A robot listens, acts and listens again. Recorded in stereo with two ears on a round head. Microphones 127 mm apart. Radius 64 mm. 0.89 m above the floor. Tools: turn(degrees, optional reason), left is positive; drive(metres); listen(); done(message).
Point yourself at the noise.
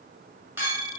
turn(degrees=-15, reason="The clink: about 15° right or 165° right.")
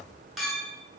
done("Found it: a clink, straight ahead, 1 to 2 m away.")